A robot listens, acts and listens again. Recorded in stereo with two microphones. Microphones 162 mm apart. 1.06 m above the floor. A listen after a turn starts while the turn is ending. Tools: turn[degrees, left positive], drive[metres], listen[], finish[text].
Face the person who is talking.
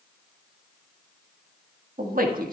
Thought: The man speaking: about 60° right or 120° right.
Action: turn[-60]
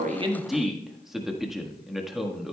Action: finish[Found it: a man speaking, straight ahead.]